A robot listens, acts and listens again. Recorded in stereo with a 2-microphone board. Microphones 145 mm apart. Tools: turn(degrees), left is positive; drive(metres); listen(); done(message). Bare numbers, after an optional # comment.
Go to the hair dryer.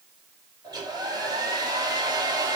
# The hair dryer: about 30° right or 150° right.
turn(-30)
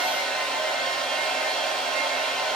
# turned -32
drive(1.0)
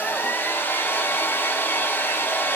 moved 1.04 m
# The hair dryer is now 15° left.
turn(15)
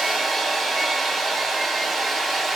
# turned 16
drive(1.0)
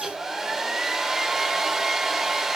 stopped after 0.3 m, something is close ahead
done("Arrived at the hair dryer, straight ahead.")